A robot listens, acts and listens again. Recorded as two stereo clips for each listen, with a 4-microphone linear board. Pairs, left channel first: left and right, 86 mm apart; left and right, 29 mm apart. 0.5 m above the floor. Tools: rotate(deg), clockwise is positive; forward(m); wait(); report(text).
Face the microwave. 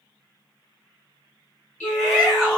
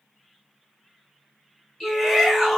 wait()
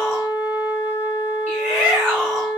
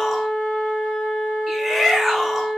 wait()
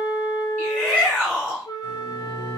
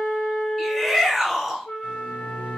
rotate(45)
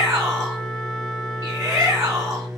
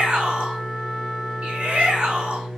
report("Found it: a microwave, straight ahead, 1 to 2 m away.")